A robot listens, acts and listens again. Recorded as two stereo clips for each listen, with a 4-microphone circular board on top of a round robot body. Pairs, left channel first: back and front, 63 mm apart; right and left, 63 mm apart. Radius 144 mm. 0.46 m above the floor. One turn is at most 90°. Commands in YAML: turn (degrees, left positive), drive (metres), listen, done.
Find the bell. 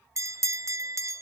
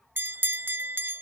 turn: 35
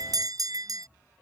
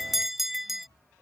done: "Found it: a bell, straight ahead."